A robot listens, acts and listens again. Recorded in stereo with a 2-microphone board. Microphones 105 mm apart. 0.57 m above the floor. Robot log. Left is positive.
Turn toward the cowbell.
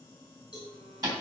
note: The cowbell: about 35° left or 145° left.
cmd yaw +35
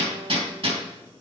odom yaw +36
cmd idle
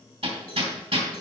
cmd idle
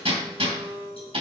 end: I heard a cowbell, but can't make it out now. It was about straight ahead or 110° left.